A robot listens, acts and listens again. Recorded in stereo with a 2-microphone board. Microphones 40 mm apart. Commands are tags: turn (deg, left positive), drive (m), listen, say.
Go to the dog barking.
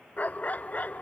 <turn deg="45"/>
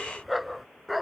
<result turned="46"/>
<drive m="1.0"/>
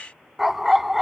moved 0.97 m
<drive m="1.0"/>
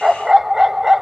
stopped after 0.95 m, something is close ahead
<turn deg="-10"/>
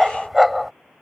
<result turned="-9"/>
<say>I am next to the dog barking.</say>